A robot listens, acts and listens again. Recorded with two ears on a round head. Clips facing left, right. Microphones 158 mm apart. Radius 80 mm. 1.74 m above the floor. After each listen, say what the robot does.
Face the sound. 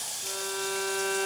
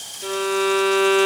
Turn 90° right.
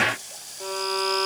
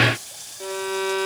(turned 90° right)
Turn 10° right.
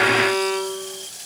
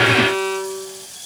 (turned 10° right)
Found it: a violin, straight ahead.